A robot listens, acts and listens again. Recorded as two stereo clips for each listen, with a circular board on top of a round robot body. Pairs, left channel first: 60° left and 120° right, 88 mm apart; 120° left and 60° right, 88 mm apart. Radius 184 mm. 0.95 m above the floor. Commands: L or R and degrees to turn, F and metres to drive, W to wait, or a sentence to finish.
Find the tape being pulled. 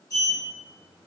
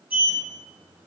W
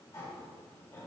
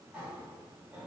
W
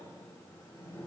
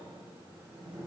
I can't make out tape being pulled to turn to.